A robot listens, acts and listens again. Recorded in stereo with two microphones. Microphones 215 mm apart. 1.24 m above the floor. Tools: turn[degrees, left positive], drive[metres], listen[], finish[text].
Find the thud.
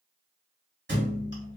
Thought: The thud: about 60° right or 120° right.
Action: turn[-60]
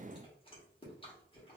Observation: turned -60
Action: listen[]
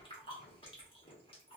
Action: finish[I heard a thud, but can't make it out now. It was about straight ahead or 60° right.]